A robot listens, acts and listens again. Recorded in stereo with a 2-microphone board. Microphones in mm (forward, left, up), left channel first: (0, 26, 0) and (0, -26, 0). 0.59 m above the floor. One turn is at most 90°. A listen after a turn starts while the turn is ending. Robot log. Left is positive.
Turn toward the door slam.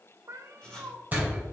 note: The door slam: about 35° right or 145° right.
cmd yaw -35
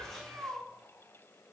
cmd idle
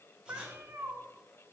end: I heard a door slam, but can't make it out now. It was about straight ahead or 110° right.